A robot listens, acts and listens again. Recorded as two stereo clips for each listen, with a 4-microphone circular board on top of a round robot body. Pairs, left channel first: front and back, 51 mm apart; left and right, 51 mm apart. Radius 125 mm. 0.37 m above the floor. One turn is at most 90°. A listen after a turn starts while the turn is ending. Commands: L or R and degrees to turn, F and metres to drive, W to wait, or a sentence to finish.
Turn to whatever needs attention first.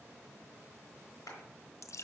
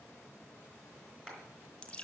W
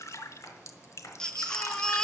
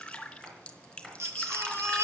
R75
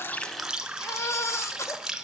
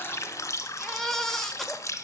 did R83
Found it: a baby crying, straight ahead, 1 to 2 m away.